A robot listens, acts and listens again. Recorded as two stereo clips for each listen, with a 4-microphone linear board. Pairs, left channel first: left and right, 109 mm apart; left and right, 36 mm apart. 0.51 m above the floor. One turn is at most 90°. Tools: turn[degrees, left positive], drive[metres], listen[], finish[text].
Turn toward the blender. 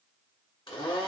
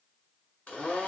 Thought: The blender: about 45° left or 135° left.
Action: turn[45]
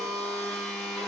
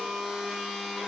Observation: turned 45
Action: finish[Facing the blender.]